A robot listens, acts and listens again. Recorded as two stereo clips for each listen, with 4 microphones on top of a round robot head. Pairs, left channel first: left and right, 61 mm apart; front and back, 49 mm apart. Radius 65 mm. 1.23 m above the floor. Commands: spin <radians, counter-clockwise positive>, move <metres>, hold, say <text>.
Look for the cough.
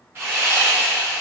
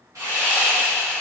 hold
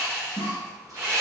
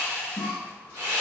spin -1.13
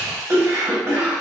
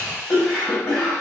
spin -0.79
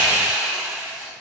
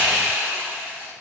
hold
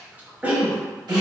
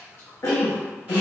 spin -0.44
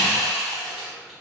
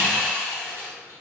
hold
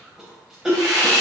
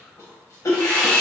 say Found it: a cough, straight ahead, under 1 m away.